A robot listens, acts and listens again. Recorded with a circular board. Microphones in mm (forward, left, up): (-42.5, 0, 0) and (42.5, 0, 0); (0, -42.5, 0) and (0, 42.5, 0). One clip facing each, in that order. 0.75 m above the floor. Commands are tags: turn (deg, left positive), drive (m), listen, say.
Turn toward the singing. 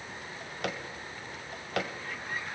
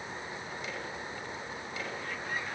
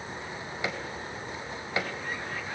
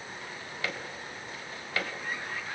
<listen/>
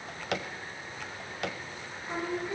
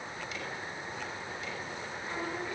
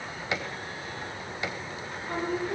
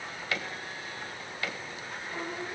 <turn deg="-110"/>
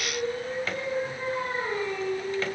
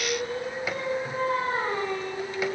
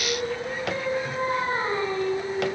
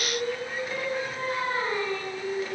<turn deg="-25"/>
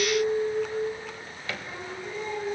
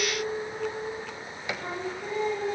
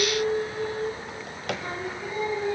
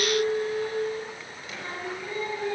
<turn deg="-20"/>
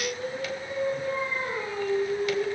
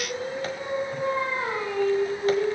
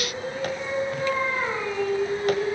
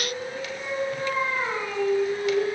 <say>Found it: singing, straight ahead, over 4 m away.</say>